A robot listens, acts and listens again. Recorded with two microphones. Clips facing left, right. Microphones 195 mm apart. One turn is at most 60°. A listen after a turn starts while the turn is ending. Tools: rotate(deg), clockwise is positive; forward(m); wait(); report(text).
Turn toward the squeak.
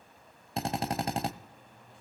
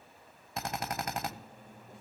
rotate(45)
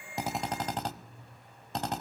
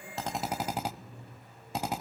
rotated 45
rotate(60)
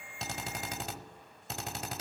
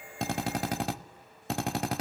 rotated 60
rotate(30)
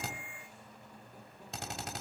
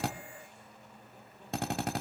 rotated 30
report("Facing the squeak.")